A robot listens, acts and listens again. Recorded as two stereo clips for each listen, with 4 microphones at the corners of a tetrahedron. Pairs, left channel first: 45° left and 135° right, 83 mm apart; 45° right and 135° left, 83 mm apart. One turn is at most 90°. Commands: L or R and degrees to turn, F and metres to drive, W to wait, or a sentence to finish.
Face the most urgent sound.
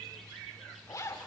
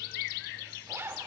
W
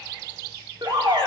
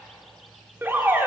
R90
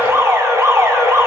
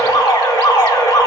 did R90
R85
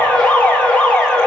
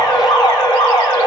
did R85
R30
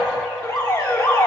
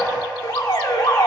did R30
R10
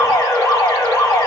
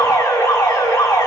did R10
Facing the alarm, 2 to 4 m away.